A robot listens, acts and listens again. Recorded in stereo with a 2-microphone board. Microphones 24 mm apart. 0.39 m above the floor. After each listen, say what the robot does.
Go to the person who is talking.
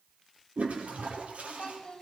Turn 35° left.
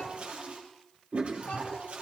Keep listening.
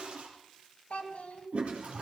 Turn 105° left.
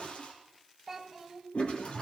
Drive 1.0 m forward.
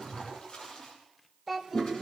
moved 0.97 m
Drive 1.0 m forward.
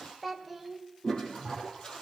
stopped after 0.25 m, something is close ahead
Arrived at the child speaking, straight ahead.